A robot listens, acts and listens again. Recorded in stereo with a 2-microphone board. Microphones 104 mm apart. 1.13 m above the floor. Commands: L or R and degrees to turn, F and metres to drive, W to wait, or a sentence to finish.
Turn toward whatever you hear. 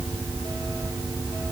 W
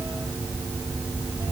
W
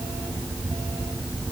I can't make out anything to turn to.